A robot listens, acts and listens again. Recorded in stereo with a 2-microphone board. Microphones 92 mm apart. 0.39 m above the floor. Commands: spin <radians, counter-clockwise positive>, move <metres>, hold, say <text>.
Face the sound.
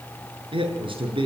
spin -1.05
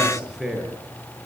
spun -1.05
say Found it: a man speaking, straight ahead.